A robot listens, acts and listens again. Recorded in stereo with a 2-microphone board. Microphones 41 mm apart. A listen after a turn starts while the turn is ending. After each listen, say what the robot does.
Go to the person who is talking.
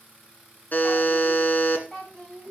Turn 30° left.
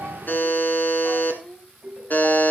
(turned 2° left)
Turn 20° left.
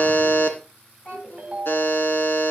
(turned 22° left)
Turn 140° left.
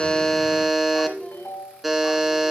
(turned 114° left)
Turn 25° left.
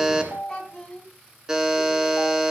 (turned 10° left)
Turn 15° left.
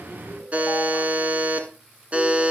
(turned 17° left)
Keep listening.
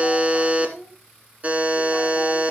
Drive 1.0 m forward.
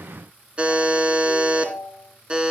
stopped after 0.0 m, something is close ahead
Keep listening.
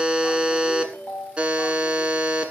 Keep listening.
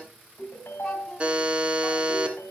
Facing where the child speaking came from. I can't hear it now. I did not reach it.